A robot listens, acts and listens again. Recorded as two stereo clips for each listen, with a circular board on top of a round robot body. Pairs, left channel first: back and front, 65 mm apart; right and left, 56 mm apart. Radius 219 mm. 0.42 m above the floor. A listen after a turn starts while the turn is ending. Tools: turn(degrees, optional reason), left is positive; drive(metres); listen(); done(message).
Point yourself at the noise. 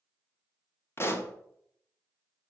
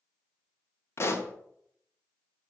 turn(degrees=-130, reason="The pop: 130° right.")
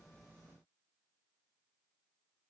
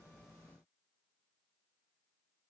done("Facing where the pop came from. I can't hear it now.")